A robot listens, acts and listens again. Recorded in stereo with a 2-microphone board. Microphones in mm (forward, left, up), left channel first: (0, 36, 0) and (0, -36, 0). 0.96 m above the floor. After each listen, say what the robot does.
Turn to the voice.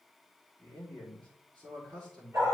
Turn 90° right.
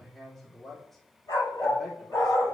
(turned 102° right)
Facing the man speaking.